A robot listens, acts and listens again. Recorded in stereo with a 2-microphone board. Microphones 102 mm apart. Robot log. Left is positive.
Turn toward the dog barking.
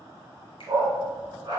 note: The dog barking: about 40° right or 140° right.
cmd yaw -40
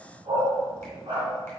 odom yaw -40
note: So it is at 120° right.
cmd yaw -120
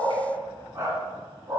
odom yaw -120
note: The dog barking is now 35° right.
cmd yaw -35
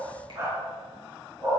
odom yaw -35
note: The dog barking is now 30° right.
cmd yaw -30
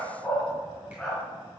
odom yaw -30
note: The dog barking is now 15° left.
cmd yaw +15
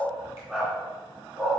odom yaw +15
end: Found it: a dog barking, straight ahead.